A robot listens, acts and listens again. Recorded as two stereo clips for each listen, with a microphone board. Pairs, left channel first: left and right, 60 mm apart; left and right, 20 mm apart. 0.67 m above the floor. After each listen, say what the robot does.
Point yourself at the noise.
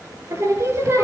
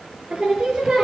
Turn 45° right.
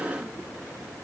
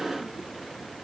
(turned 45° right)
Keep listening.
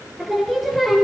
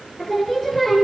Found it: singing, straight ahead.